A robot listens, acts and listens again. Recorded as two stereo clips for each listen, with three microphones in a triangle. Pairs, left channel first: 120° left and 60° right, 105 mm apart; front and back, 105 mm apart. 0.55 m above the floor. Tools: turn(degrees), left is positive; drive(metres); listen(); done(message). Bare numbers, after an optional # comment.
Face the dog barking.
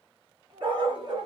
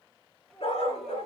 # The dog barking: 20° right.
turn(-20)
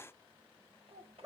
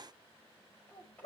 # The dog barking is now 10° right.
turn(-10)
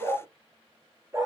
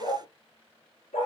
done("Facing the dog barking, 2 to 4 m away.")